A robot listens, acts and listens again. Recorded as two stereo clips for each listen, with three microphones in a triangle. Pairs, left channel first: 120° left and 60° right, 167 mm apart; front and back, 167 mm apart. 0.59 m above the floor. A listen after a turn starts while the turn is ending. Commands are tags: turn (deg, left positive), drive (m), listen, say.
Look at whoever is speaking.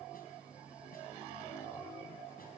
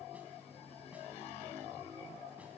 <listen/>
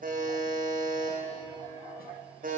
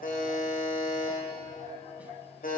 <listen/>
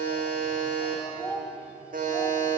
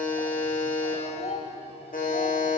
<turn deg="45"/>
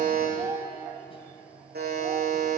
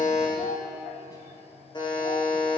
<listen/>
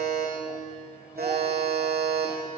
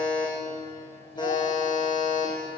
<listen/>
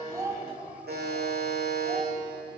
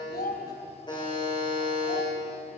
<turn deg="10"/>
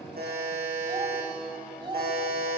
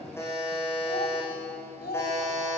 <say>Found it: a child speaking, straight ahead, 2 to 4 m away.</say>